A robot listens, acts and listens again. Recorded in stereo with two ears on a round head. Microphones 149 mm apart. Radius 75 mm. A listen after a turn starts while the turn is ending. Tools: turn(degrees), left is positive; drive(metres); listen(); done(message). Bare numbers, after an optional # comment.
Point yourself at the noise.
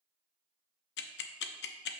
# The ticking: about 70° left or 110° left.
turn(70)
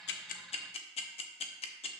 # So it is at 35° left.
turn(35)
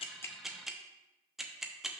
done("Found it: ticking, straight ahead, under 1 m away.")